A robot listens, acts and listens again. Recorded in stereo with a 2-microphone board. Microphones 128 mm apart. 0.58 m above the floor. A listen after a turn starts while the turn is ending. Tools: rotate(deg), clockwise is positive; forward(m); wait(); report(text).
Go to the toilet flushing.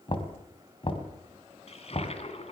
rotate(-50)
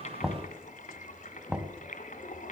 rotate(-80)
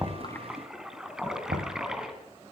forward(1.0)
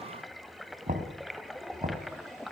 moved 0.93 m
forward(1.0)
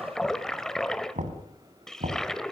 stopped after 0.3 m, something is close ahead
report("I am next to the toilet flushing.")